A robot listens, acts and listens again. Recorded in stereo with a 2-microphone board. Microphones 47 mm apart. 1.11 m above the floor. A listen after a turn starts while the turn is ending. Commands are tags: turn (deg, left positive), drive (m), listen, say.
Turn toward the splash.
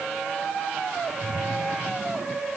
<turn deg="-30"/>
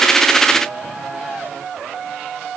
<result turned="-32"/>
<listen/>
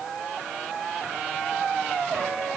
<say>I heard a splash, but can't make it out now. It was about 20° left or 135° right.</say>